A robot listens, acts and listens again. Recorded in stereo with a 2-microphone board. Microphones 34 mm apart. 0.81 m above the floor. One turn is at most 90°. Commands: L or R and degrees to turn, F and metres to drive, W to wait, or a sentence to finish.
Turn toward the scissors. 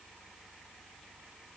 W
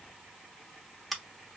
L30
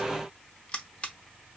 L90
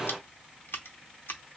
L90
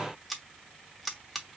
Found it: scissors, straight ahead, under 1 m away.